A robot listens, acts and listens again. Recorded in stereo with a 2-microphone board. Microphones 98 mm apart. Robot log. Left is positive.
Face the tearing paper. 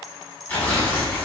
note: The tearing paper: about 15° left or 165° left.
cmd yaw +15
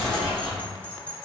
end: Found it: tearing paper, straight ahead.